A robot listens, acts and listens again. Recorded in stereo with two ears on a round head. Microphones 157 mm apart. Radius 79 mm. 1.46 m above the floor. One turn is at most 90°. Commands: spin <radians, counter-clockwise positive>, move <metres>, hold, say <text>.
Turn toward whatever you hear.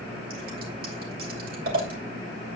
spin -0.96
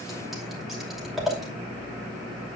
say Found it: scissors, straight ahead, 2 to 4 m away.